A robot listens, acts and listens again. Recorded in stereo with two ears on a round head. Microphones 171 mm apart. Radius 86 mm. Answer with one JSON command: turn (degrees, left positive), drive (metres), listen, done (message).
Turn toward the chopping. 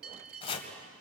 {"turn": 30}
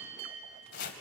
{"turn": 115}
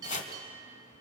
{"turn": 45}
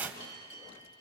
{"turn": -10}
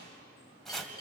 {"done": "Found it: chopping, straight ahead, 2 to 4 m away."}